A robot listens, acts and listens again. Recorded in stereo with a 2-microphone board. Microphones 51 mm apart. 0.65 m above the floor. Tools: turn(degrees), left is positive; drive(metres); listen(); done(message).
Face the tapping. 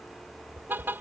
turn(degrees=-70)
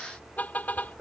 turn(degrees=-30)
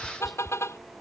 done("Facing the tapping.")